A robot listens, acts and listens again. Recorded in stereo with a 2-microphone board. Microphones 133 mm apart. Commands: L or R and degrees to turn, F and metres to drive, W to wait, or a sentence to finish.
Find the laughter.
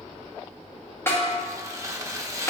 W
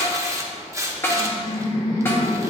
L30
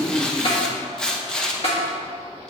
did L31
Facing the laughter, 2 to 4 m away.